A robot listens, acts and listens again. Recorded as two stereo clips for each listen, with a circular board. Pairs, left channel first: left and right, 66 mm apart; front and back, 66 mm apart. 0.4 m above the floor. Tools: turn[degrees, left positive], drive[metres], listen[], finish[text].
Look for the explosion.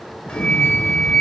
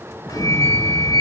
Thought: The explosion: 155° left.
Action: turn[155]
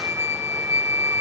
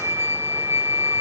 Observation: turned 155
Action: finish[I heard an explosion from this way, but can't make it out now.]